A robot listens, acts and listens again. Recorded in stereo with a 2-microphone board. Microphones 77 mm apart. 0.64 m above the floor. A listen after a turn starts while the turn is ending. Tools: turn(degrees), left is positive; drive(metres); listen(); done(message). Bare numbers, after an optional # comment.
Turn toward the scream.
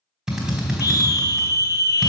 # The scream: about 50° left or 130° left.
turn(50)
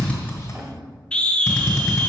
# So it is at 15° left.
turn(15)
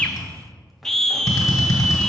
done("Found it: a scream, straight ahead, under 1 m away.")